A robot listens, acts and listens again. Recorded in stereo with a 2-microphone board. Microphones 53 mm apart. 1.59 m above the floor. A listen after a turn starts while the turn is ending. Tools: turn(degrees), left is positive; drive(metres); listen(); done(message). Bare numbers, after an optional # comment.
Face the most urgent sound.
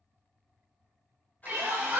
# The crying: about 50° right or 130° right.
turn(-50)
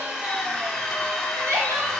# So it is at 75° right.
turn(-75)
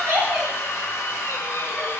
listen()
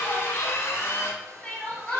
# The crying is now 15° left.
turn(15)
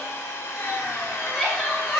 done("Facing the crying.")